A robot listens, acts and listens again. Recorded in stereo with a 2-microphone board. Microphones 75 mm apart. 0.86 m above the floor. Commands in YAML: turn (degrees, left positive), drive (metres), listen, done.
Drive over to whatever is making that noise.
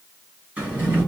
turn: -20
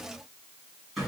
drive: 1.0
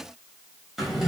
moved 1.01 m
drive: 1.0
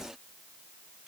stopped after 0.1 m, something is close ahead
listen: true
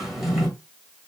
done: "Arrived at the drawer, straight ahead."